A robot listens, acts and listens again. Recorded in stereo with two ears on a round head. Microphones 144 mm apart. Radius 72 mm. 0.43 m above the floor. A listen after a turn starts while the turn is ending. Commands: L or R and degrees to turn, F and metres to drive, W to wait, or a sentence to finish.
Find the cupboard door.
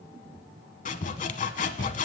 W
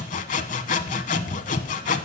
W
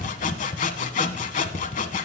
I can't make out a cupboard door to turn to.